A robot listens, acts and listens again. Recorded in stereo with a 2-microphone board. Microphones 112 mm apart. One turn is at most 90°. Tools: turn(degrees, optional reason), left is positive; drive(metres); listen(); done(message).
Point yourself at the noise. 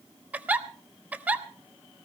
turn(degrees=-30)
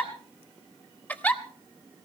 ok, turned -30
turn(degrees=15, reason="So it is at 15° left.")
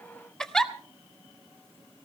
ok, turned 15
done("Facing the giggle, 1 to 2 m away.")